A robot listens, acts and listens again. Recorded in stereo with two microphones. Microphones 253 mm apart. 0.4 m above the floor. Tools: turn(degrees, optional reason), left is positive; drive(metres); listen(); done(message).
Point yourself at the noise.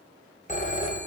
turn(degrees=30, reason="The phone ringing: about 30° left or 150° left.")
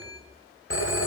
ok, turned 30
turn(degrees=115, reason="So it is at 115° left.")
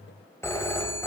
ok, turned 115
turn(degrees=10, reason="The phone ringing is now 10° left.")
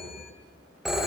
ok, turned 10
done("Facing the phone ringing, under 1 m away.")